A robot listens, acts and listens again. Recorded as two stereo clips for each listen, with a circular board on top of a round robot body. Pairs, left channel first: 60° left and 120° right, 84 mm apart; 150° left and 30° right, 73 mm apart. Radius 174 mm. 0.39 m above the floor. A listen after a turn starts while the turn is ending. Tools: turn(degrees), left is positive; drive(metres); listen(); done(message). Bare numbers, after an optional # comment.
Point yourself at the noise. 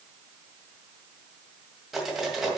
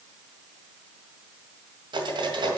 # The cutlery clinking: 30° right.
turn(-30)
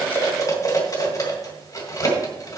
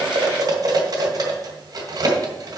# The cutlery clinking is now 10° left.
turn(10)
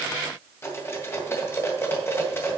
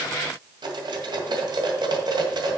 done("Facing the cutlery clinking, 2 to 4 m away.")